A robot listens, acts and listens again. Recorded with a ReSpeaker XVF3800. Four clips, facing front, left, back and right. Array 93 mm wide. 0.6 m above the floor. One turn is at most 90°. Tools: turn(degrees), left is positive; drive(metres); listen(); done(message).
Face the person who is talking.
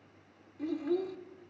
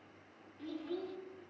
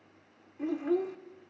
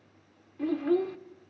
turn(degrees=-90)
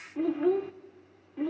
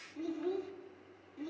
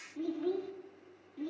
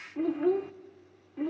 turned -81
turn(degrees=-35)
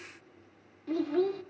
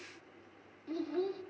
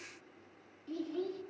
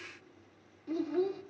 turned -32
done("Found it: a child speaking, straight ahead, under 1 m away.")